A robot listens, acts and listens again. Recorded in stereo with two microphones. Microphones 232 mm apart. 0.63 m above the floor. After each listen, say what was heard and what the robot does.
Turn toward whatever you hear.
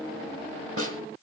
The snare drum: about 70° right or 110° right. Turn 70° right.
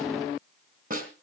So it is at 35° right. Turn 35° right.
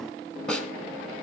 Facing the snare drum, 2 to 4 m away.